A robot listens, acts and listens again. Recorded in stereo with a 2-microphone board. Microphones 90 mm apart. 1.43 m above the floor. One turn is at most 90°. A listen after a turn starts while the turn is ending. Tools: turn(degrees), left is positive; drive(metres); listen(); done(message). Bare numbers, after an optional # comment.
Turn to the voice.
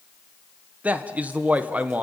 # The man speaking: about 15° right or 165° right.
turn(-15)
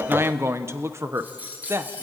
# So it is at 150° right.
turn(-90)
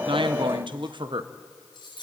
# The man speaking is now 65° right.
turn(-65)
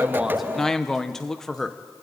done("Found it: a man speaking, straight ahead, 1 to 2 m away.")